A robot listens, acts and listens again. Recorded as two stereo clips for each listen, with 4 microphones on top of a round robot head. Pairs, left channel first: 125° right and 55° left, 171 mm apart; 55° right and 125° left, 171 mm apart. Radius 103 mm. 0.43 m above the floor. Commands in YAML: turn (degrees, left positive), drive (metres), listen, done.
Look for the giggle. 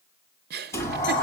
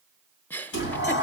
turn: 25
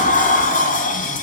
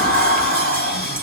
listen: true
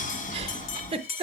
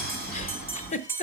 done: "Facing the giggle."